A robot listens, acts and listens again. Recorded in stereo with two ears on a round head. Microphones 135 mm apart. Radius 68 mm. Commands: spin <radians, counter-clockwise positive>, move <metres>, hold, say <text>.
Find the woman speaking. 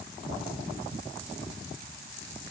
hold
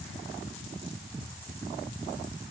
hold
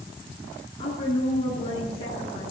spin 0.61
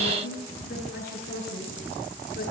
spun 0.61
spin 1.92
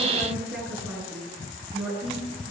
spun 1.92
say Found it: a woman speaking, straight ahead.